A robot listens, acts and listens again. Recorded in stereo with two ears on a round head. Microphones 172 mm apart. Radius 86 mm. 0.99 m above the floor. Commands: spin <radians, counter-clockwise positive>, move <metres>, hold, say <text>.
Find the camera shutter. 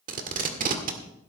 hold
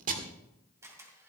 spin -0.26
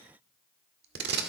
hold
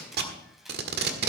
hold
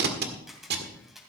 say Found it: a camera shutter, straight ahead, 2 to 4 m away.